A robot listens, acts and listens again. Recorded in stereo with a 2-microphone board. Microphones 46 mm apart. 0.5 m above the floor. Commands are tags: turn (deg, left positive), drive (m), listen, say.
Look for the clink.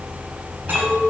<turn deg="-50"/>
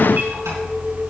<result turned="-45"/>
<say>Facing the clink.</say>